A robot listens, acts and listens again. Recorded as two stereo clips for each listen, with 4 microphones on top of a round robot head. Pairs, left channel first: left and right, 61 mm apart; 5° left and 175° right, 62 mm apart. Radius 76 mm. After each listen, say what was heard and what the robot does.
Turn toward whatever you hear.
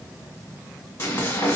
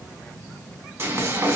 The frying: 140° left. Turn 140° left.
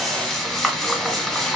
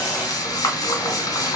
Facing the frying, 1 to 2 m away.